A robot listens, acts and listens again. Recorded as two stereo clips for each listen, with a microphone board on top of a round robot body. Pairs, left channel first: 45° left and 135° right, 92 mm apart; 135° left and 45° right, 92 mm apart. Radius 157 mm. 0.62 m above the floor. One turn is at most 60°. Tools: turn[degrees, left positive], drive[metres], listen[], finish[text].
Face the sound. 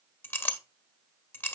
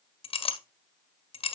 Thought: The clink: 115° left.
Action: turn[60]
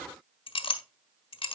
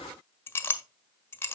Thought: The clink is now 70° left.
Action: turn[60]
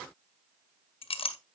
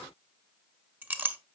Thought: The clink is now 25° left.
Action: turn[25]
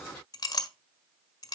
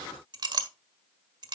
Action: finish[Found it: a clink, straight ahead, 1 to 2 m away.]